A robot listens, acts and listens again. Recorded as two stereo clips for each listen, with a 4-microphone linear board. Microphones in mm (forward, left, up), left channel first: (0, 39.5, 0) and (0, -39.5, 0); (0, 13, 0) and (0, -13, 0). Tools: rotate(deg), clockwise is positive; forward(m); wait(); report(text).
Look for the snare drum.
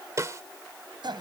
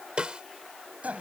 rotate(40)
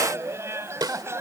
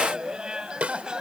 rotate(85)
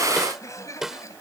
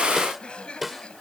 report("Facing the snare drum.")